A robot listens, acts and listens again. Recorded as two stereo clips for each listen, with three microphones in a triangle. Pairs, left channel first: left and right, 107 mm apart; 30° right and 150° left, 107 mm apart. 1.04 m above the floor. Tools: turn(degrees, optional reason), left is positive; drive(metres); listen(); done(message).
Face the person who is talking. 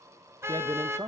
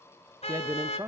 turn(degrees=-145, reason="The man speaking: 145° right.")
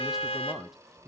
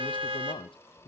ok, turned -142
listen()
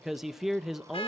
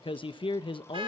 done("Facing the man speaking, under 1 m away.")